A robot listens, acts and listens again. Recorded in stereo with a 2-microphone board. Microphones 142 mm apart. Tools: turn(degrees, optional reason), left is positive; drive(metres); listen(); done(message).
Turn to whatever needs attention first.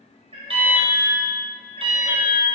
turn(degrees=-40, reason="The alarm: about 40° right or 140° right.")
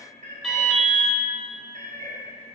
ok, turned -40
done("Facing the alarm.")